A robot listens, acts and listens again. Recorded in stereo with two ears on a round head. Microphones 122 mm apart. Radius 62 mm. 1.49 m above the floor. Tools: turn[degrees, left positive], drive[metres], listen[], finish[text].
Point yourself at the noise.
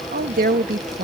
Thought: The woman speaking: about 60° right or 120° right.
Action: turn[-60]
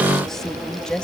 Action: finish[Facing the woman speaking.]